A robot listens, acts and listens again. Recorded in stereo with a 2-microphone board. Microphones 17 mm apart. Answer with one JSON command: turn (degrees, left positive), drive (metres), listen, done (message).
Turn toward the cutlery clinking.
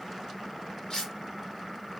{"turn": 55}
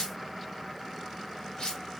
{"turn": 75}
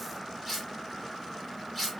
{"done": "Found it: cutlery clinking, straight ahead, 2 to 4 m away."}